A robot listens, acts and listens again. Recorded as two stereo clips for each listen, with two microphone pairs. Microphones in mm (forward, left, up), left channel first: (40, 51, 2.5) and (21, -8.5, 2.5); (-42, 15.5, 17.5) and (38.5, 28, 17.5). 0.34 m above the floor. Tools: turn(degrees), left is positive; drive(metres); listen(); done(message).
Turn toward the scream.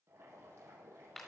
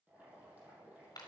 listen()
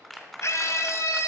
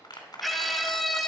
turn(degrees=100)
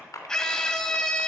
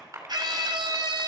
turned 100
done("Facing the scream, 1 to 2 m away.")